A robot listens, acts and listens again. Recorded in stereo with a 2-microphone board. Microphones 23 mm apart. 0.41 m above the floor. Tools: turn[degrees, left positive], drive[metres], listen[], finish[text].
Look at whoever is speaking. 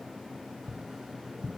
Action: listen[]
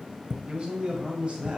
Thought: The man speaking: about 50° right or 130° right.
Action: turn[-50]
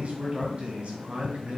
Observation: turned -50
Thought: So it is at 50° right.
Action: turn[-50]
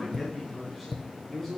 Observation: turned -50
Action: finish[Facing the man speaking, 2 to 4 m away.]